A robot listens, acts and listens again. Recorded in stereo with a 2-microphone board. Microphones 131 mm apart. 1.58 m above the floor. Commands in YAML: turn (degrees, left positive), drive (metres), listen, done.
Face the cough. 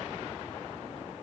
listen: true
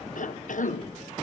turn: 90
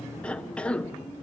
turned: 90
turn: 10
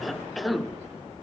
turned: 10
done: "Facing the cough, 1 to 2 m away."